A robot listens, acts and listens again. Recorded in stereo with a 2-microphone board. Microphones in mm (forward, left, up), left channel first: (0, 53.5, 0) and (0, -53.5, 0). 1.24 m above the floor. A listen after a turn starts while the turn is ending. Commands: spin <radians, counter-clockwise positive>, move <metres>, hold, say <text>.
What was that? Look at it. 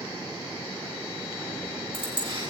spin -0.79
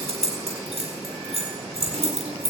spin -1.57
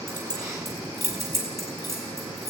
spin -0.44
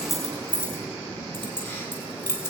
spin 0.35
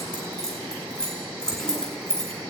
say Facing the keys jangling, over 4 m away.